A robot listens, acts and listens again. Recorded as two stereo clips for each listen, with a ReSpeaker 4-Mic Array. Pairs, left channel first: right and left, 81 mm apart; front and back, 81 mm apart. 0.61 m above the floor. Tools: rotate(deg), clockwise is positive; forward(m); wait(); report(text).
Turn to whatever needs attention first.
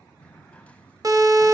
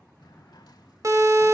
rotate(-130)
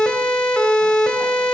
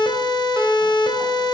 rotate(10)
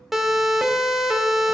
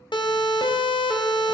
report("Facing the siren.")